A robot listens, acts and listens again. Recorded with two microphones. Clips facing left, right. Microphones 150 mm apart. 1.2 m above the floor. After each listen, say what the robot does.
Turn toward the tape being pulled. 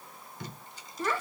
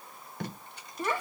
Turn 65° right.
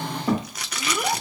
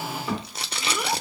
Turn 30° right.
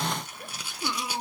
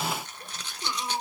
Turn 10° left.
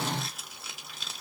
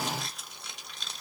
Facing the tape being pulled.